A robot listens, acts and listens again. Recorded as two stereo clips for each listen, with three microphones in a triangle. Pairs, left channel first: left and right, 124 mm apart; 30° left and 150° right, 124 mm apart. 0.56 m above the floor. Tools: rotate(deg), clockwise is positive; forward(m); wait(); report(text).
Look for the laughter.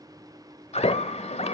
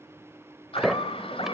rotate(-65)
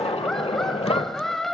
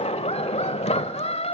report("Facing the laughter.")